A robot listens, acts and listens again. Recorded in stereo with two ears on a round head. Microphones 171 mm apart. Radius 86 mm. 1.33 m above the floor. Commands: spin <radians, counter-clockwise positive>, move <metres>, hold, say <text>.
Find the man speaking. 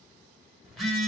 hold
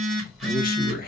spin 0.96
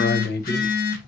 spin 0.96
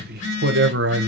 spin -1.13
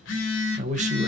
spin -0.70
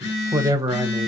spin -0.26
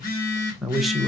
say Found it: a man speaking, straight ahead.